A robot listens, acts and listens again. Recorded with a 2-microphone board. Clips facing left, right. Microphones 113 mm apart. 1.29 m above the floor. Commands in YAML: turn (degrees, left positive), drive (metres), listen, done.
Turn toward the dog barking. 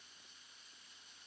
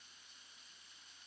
listen: true
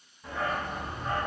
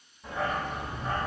turn: -30
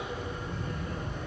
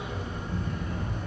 turn: -135
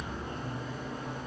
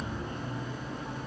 turn: 40
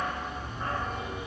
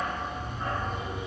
done: "Found it: a dog barking, straight ahead."